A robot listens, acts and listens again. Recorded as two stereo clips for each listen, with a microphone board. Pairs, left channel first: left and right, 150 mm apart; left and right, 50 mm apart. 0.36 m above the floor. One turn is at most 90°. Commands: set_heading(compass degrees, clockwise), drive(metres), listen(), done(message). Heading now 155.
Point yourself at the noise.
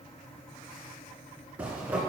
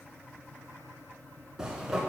set_heading(185)
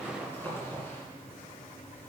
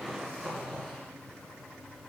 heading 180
set_heading(165)
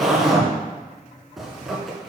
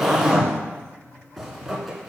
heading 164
done("Facing the zipper.")